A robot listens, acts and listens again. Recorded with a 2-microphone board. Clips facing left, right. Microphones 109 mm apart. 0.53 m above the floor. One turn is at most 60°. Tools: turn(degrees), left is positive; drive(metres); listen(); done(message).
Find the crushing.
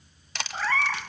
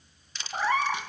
turn(degrees=60)
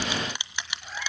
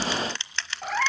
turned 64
turn(degrees=15)
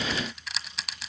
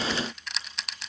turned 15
done("Found it: crushing, straight ahead.")